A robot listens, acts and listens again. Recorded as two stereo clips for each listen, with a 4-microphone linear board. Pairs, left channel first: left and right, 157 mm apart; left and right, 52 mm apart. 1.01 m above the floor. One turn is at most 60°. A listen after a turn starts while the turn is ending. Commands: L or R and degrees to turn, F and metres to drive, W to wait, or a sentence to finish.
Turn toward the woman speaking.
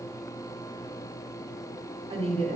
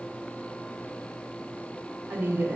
R45
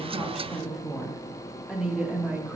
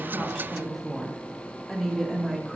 R10
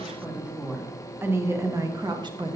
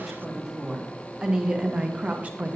R35
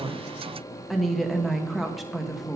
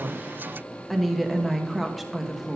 Found it: a woman speaking, straight ahead, 1 to 2 m away.